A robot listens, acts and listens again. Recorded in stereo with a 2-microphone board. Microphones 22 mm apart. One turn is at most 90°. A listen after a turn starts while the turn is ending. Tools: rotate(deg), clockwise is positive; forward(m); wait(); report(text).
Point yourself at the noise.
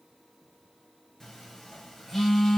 rotate(-30)
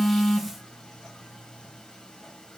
wait()
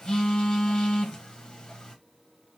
rotate(-90)
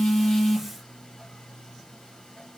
rotate(-40)
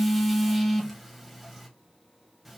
report("Found it: a phone buzzing, straight ahead.")